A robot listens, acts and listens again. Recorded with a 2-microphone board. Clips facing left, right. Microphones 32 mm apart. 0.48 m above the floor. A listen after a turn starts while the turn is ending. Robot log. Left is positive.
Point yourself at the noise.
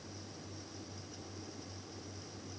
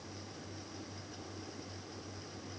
cmd idle
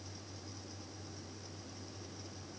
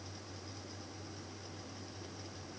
cmd idle
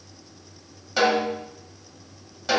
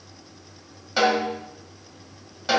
cmd yaw -30
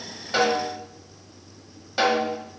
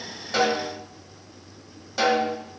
note: So it is at 20° left.
cmd yaw +20
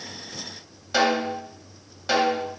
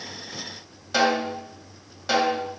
end: Found it: a snare drum, straight ahead.